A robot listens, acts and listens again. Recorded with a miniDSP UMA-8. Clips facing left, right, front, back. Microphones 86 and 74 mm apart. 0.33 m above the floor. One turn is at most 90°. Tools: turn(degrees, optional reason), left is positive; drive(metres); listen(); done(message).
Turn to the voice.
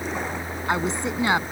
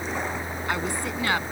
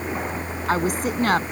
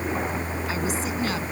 turn(degrees=20, reason="The woman speaking: 20° left.")
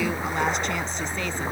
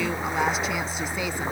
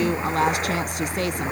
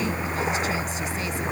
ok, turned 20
listen()
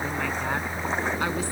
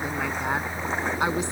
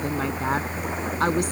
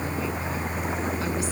listen()
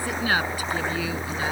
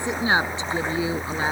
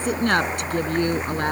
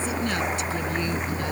turn(degrees=-30, reason="The woman speaking is now 30° right.")
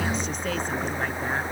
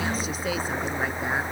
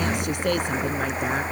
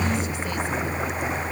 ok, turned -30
listen()
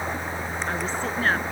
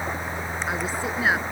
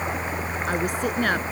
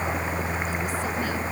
listen()
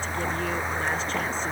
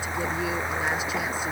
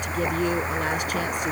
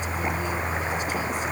done("I heard a woman speaking from this way, but can't make it out now.")